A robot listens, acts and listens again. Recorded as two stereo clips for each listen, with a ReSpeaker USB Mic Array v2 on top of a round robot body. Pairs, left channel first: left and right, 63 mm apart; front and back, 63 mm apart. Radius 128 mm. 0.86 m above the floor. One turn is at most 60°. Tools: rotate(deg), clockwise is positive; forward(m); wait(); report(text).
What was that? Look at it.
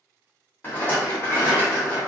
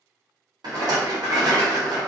rotate(-60)
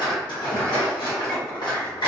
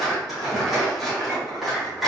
rotate(-60)
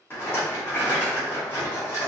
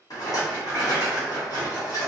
rotate(-35)
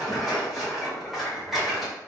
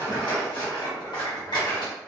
report("Facing the rattle.")